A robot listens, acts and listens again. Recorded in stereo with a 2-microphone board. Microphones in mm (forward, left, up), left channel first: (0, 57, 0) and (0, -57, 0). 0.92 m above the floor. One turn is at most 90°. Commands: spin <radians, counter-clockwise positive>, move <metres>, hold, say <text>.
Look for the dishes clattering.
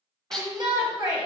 spin 0.52
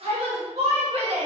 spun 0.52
hold
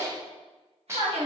spin -0.44
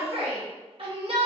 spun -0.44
hold
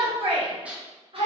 spin -0.17
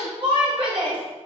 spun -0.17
hold
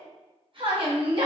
hold
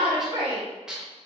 say Found it: dishes clattering, straight ahead.